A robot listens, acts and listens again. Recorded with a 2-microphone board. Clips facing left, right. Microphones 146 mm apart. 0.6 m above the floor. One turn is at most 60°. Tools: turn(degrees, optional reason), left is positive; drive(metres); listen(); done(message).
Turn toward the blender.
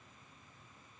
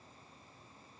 listen()
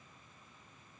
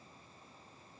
listen()
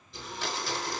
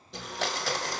turn(degrees=-60)
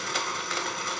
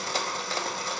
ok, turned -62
turn(degrees=-35, reason="So it is at 35° right.")
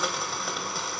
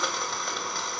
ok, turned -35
done("Found it: a blender, straight ahead.")